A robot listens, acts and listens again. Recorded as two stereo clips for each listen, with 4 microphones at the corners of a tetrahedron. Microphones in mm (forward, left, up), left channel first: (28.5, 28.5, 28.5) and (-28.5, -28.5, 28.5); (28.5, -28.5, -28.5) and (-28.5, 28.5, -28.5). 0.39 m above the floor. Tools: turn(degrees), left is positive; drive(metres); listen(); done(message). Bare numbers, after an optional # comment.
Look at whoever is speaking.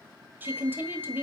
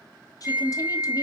# The woman speaking: 70° right.
turn(-70)
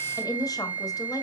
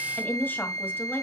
# The woman speaking is now 20° left.
turn(20)
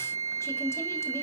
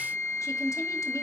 done("Found it: a woman speaking, straight ahead, 1 to 2 m away.")